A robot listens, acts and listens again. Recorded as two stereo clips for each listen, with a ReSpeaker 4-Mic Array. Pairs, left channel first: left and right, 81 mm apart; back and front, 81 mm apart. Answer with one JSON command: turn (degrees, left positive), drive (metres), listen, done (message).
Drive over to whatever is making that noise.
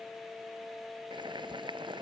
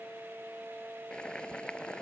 {"turn": -100}
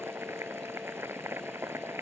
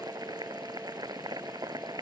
{"turn": -30}
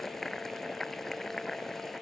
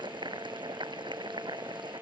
{"drive": 1.0}
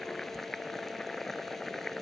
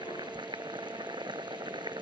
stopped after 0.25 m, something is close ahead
{"done": "Blocked. The boiling is further on, straight ahead."}